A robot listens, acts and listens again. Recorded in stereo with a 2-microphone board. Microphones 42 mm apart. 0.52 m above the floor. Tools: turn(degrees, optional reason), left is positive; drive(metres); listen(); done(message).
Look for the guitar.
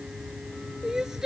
listen()
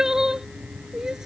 listen()
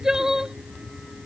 done("I can't make out a guitar to turn to.")